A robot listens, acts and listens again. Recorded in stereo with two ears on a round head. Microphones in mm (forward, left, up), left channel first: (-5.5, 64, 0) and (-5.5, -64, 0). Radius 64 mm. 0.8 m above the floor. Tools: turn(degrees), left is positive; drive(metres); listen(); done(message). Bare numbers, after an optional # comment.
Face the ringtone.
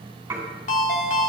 # The ringtone: about 55° left or 125° left.
turn(55)
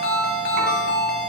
# So it is at 70° left.
turn(70)
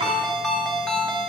done("Found it: a ringtone, straight ahead, 1 to 2 m away.")